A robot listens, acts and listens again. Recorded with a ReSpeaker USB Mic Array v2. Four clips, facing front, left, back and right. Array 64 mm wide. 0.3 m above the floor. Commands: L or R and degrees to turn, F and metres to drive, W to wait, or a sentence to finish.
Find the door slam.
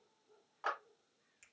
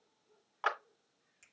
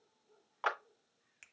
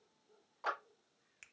W
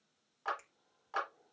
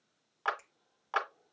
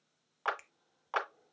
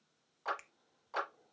W
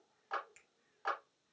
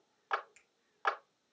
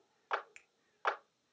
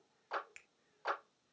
I can't make out a door slam, only a finger snap and a clap.